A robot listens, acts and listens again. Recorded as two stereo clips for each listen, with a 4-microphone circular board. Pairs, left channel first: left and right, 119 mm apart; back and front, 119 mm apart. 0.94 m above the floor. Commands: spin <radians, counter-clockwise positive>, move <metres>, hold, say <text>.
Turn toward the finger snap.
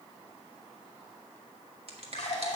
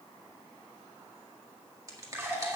spin -1.05
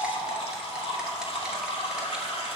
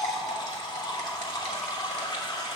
hold
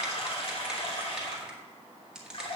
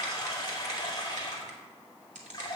say Facing the finger snap, 1 to 2 m away.